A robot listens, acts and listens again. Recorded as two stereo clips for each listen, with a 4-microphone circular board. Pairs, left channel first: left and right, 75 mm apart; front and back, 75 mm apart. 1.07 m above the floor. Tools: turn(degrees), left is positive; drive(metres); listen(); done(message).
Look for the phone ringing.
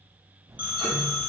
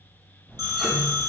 turn(degrees=-160)
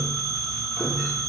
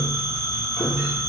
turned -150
turn(degrees=-10)
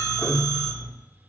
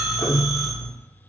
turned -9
listen()
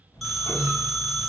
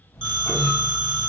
done("Facing the phone ringing.")